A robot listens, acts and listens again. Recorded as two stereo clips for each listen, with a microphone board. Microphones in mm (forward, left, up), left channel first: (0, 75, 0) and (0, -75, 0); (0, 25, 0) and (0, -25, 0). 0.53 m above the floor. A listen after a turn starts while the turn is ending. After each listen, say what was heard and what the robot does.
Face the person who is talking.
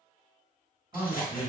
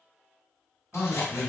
The man speaking: about 30° right or 150° right. Turn 30° right.
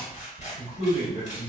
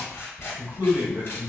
So it is at 115° right. Turn 115° right.
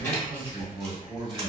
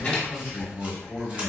The man speaking is now 35° right. Turn 35° right.
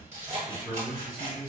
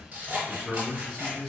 The man speaking is now 15° right. Turn 15° right.
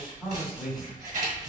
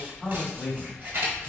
Found it: a man speaking, straight ahead, 1 to 2 m away.